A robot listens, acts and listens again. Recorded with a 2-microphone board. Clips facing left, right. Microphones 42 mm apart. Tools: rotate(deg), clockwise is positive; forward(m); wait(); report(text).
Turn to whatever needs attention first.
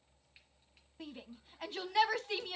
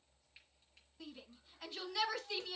rotate(-40)
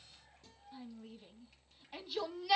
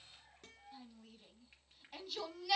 report("Facing the shout, 2 to 4 m away.")